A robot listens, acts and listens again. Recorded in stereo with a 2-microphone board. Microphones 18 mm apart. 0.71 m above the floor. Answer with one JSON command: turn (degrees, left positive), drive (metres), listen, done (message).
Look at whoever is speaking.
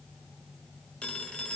{"listen": true}
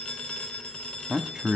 {"turn": -40}
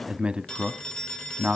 {"turn": -90}
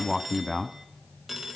{"done": "Facing the man speaking."}